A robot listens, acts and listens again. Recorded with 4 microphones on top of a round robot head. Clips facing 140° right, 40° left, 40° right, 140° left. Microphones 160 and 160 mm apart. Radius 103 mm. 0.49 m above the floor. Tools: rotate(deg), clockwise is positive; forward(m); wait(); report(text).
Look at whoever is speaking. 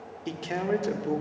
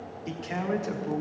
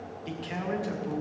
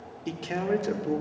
rotate(-170)
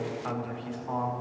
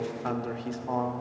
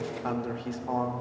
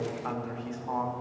report("Found it: a man speaking, straight ahead.")